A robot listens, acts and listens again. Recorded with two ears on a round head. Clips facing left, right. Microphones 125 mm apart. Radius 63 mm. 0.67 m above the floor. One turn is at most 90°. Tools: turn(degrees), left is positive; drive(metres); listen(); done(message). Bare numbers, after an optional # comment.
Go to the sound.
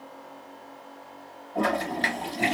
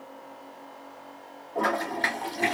# The toilet flushing: about 30° left or 150° left.
turn(30)
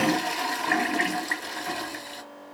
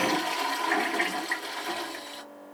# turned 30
# So it is at 120° left.
turn(90)
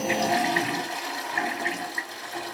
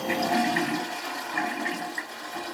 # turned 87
# The toilet flushing is now 35° left.
turn(35)
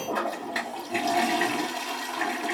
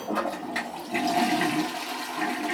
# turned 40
drive(1.0)
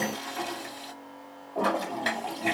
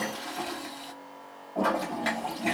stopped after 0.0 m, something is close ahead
done("Something is in my way. I am facing the toilet flushing but have not reached it.")